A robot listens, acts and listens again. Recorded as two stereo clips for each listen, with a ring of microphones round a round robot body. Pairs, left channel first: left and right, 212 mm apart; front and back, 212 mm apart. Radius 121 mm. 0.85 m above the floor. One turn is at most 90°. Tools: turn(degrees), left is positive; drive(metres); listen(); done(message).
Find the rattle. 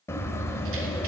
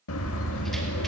listen()
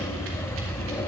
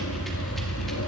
listen()
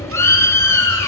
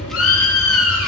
done("I can't make out a rattle, only a bird.")